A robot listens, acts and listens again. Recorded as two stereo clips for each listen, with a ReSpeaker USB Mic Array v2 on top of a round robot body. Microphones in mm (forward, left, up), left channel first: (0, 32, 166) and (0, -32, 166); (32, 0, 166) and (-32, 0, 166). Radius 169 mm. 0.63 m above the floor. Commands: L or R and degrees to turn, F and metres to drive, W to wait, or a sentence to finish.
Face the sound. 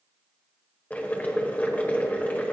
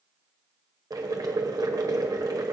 L160
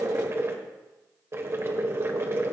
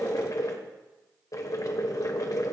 R35
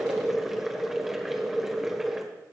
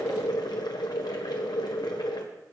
Facing the boiling, 1 to 2 m away.